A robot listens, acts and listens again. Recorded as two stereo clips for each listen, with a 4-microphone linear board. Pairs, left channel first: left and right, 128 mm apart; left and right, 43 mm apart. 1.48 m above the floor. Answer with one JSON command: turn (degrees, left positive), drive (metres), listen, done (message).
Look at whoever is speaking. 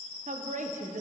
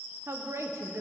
{"turn": -90}
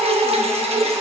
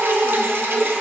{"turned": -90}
{"listen": true}
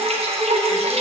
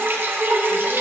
{"listen": true}
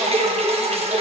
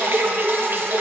{"done": "Facing where the woman speaking came from. I can't hear it now."}